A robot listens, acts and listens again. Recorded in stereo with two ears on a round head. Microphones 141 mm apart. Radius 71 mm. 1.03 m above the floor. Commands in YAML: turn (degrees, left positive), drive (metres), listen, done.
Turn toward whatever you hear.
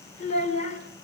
turn: 50
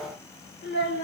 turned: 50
turn: 70
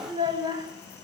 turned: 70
turn: -25
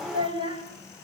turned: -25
turn: -35
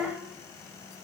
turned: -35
turn: -10
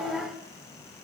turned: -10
done: "Found it: a child speaking, straight ahead, over 4 m away."